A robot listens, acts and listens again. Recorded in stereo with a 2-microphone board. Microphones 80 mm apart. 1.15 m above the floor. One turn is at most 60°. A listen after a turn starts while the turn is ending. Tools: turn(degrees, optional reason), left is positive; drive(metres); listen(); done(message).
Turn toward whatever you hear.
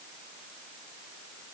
listen()
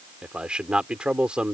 turn(degrees=-30)
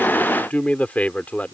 turn(degrees=20, reason="So it is at 20° left.")
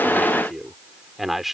done("Found it: a man speaking, straight ahead.")